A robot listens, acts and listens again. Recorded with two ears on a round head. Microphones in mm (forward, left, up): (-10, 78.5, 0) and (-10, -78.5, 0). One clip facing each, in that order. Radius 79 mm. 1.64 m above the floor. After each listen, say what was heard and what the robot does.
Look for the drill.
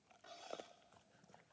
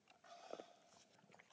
Keep listening.
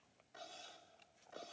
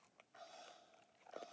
Keep listening.
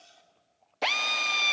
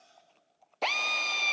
Turn 30° left.
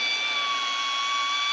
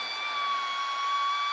So it is at 145° left. Turn 145° left.
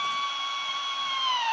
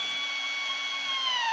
The drill is now 20° right. Turn 20° right.
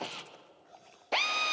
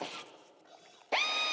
Found it: a drill, straight ahead.